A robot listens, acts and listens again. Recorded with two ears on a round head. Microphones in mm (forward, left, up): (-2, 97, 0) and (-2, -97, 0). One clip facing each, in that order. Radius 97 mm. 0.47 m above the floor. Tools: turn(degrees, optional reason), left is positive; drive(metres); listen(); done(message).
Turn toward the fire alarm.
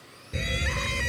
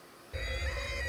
turn(degrees=45, reason="The fire alarm: about 45° left or 135° left.")
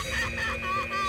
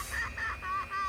turn(degrees=95, reason="So it is at 95° left.")
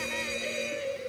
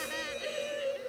turn(degrees=30, reason="The fire alarm is now 30° left.")
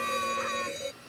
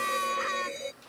done("Facing the fire alarm.")